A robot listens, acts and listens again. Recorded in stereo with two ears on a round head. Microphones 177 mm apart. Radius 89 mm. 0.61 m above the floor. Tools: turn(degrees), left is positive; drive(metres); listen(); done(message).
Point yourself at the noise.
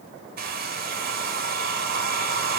turn(degrees=-45)
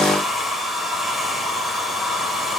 done("Facing the hair dryer.")